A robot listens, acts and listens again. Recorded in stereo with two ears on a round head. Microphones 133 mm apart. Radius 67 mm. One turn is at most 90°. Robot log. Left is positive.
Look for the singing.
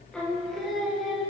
cmd yaw -30
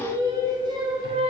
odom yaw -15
note: So it is at 140° right.
cmd yaw -90
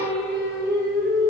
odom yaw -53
note: The singing is now 55° right.
cmd yaw -55
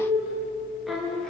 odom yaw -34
end: Facing the singing, 1 to 2 m away.